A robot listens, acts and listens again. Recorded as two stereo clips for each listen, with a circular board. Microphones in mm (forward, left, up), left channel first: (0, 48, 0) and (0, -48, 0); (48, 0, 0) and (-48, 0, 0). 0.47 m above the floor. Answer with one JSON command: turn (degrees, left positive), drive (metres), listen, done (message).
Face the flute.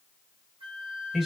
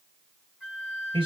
{"turn": -95}
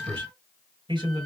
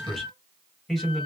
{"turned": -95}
{"done": "Facing the flute, 1 to 2 m away."}